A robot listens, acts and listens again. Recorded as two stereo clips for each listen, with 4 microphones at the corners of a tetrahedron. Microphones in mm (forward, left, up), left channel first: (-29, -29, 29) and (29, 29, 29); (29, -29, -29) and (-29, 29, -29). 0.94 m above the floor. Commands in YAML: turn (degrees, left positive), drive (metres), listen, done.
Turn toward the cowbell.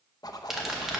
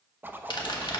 listen: true
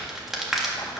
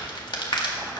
listen: true
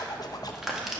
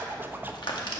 done: "I can't make out a cowbell to turn to."